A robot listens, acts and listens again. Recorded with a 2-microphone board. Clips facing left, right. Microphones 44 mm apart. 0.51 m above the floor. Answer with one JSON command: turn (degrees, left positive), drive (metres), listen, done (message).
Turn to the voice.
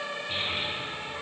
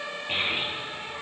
{"turn": -40}
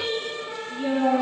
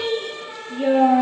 {"turn": -105}
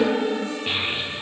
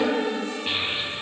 {"done": "Found it: a child speaking, straight ahead."}